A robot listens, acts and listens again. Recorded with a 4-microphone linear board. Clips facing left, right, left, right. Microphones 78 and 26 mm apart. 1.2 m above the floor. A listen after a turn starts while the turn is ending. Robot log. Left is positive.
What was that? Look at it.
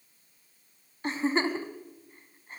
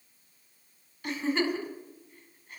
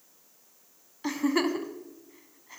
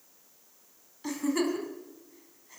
note: The giggle: about 35° left or 145° left.
cmd yaw +35
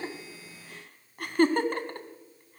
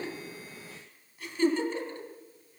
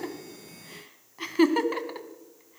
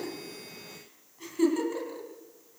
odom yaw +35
note: So it is at 110° left.
cmd yaw +110
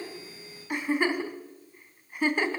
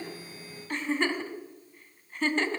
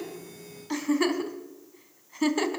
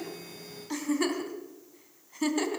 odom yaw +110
note: The giggle is now 15° left.
cmd yaw +15
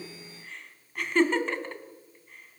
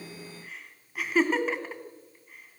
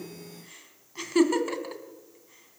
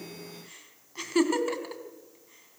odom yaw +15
end: Found it: a giggle, straight ahead.